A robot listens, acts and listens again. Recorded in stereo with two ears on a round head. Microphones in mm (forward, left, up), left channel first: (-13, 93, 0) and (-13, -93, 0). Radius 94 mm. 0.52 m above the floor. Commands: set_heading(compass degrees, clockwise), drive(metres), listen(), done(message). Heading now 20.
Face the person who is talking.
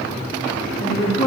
set_heading(350)
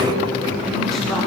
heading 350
done("Found it: a woman speaking, straight ahead, 2 to 4 m away.")